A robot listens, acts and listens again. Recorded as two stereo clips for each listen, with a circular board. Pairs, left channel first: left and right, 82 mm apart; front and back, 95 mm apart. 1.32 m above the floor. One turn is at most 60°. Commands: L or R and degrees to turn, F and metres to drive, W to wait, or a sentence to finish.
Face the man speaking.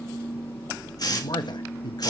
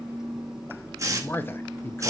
L60
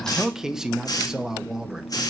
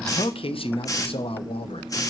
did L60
Facing the man speaking.